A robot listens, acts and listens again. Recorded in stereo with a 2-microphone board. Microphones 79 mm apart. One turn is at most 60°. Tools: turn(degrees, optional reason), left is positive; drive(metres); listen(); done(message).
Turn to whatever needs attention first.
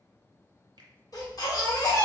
turn(degrees=50, reason="The baby crying: about 50° left or 130° left.")
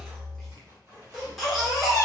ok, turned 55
done("Facing the baby crying.")